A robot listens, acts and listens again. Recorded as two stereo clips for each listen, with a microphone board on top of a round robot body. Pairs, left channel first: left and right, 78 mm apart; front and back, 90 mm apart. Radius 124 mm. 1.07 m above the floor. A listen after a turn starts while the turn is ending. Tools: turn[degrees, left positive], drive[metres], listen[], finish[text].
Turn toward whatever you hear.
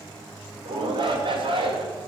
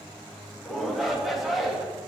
Thought: The shout: 90° right.
Action: turn[-90]
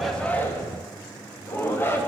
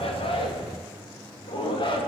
Thought: The shout is now 30° left.
Action: turn[30]
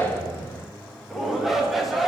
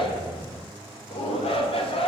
Action: finish[Found it: a shout, straight ahead, 2 to 4 m away.]